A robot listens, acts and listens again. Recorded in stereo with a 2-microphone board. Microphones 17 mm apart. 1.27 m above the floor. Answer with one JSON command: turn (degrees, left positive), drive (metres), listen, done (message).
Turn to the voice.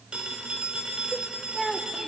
{"turn": 30}
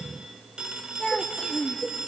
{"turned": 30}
{"turn": 135}
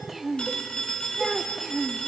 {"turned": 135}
{"done": "Facing the child speaking."}